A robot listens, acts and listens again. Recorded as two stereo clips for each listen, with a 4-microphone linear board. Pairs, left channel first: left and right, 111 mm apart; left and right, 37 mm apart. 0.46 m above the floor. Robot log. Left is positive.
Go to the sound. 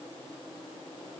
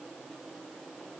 cmd idle
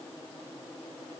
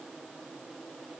cmd idle
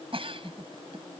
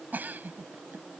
note: The giggle: about 55° right or 125° right.
cmd yaw -55
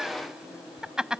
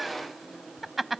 cmd fwd 1.0
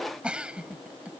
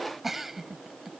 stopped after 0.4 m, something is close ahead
note: The giggle is now 10° right.
cmd yaw -10
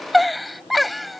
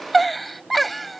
end: Blocked. The giggle is further on, straight ahead.